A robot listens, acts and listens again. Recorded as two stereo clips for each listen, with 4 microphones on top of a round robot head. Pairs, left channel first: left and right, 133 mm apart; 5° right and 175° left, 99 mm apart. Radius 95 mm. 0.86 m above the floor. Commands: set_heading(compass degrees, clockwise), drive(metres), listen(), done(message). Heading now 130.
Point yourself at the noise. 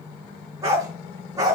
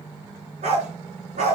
set_heading(285)
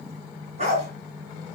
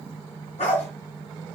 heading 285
set_heading(325)
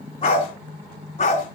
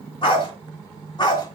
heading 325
set_heading(285)
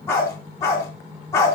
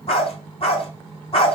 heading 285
set_heading(270)
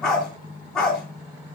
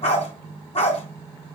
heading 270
done("Found it: a dog barking, straight ahead, 2 to 4 m away.")